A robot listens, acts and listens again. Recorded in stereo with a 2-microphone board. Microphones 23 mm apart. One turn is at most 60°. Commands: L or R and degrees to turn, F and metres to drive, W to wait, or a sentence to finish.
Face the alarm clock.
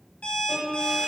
L60
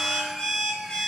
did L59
L55
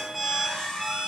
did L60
Found it: an alarm clock, straight ahead, 1 to 2 m away.